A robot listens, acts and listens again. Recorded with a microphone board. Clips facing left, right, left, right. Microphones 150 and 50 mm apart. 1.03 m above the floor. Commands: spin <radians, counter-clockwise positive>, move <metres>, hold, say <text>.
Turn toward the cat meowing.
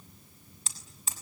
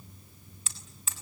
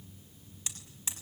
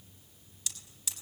hold
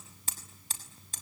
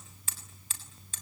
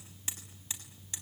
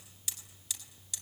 hold
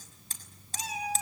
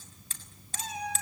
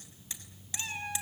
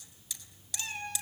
spin 0.52
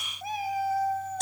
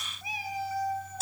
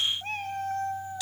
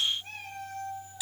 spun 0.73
spin 2.18
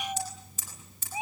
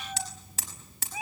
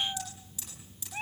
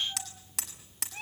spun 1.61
spin 0.44
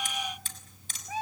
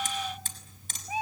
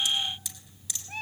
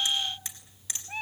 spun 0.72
spin -0.26
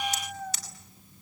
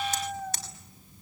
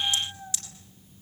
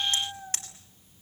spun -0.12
say Facing the cat meowing, 2 to 4 m away.